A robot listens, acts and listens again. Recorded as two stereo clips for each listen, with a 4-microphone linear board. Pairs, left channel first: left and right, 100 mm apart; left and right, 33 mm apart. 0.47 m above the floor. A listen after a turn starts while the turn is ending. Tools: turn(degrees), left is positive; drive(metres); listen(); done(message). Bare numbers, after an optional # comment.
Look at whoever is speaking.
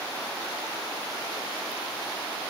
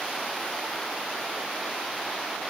listen()
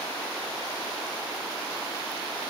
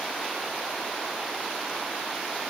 listen()
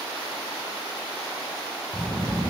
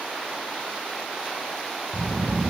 turn(30)
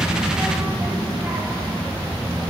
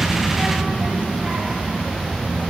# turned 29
# So it is at 20° right.
turn(-20)
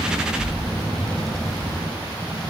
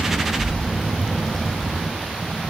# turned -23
done("Facing the child speaking, 1 to 2 m away.")